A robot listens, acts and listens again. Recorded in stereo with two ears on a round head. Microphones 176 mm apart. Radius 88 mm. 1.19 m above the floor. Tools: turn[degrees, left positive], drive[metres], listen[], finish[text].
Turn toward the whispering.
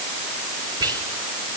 Thought: The whispering: about 20° right or 160° right.
Action: turn[-20]
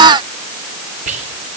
Thought: So it is at 140° right.
Action: turn[-140]
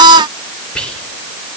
Action: finish[Found it: whispering, straight ahead, 2 to 4 m away.]